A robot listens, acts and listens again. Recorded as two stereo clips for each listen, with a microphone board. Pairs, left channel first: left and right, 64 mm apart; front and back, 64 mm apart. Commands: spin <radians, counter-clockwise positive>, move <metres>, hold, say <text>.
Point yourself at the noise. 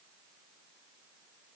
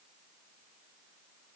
hold
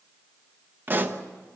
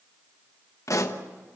spin -0.52
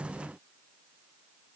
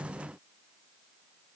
say Facing where the pop came from. I can't hear it now.